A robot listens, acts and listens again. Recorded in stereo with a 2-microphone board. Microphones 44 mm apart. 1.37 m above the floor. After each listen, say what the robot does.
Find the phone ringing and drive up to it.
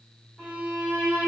Keep listening.
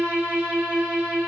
Keep listening.
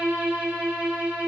I can't make out a phone ringing to turn to.